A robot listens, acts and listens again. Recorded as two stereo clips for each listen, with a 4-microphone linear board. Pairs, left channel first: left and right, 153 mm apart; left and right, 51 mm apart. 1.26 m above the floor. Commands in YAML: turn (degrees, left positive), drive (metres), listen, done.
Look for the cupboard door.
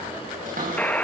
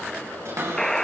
turn: -65
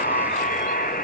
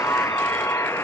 listen: true
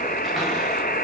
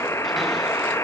listen: true
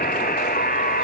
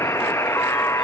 done: "I heard a cupboard door, but can't make it out now. It was about straight ahead or 50° right."